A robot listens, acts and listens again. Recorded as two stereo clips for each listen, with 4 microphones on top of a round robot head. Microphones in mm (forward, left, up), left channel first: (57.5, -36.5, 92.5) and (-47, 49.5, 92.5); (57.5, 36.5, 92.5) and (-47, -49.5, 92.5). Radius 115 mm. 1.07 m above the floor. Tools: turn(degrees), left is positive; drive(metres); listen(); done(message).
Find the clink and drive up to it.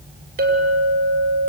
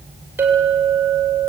turn(degrees=145)
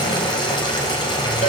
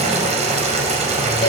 listen()
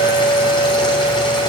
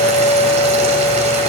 drive(metres=1.0)
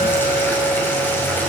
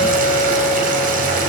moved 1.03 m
listen()
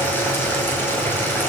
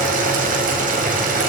listen()
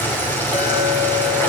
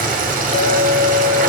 turn(degrees=-10)
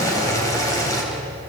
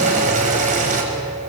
listen()
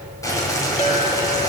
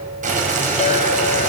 drive(metres=1.0)
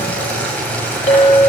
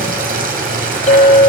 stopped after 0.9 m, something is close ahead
done("I am next to the clink.")